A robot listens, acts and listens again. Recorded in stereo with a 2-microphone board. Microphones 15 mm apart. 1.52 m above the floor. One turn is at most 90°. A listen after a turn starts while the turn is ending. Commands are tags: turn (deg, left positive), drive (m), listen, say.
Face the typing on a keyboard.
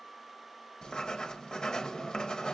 <listen/>
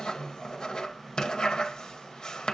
<listen/>
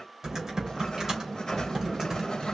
<turn deg="-45"/>
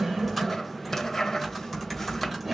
<say>Facing the typing on a keyboard, 2 to 4 m away.</say>